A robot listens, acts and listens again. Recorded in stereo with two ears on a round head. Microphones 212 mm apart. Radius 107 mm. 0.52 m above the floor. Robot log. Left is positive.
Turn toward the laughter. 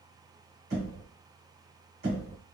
cmd idle
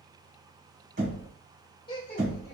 note: The laughter: about 20° left or 160° left.
cmd yaw +20
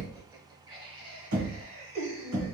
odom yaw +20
note: So it is at 30° right.
cmd yaw -30
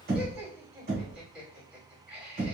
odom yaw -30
end: Facing the laughter.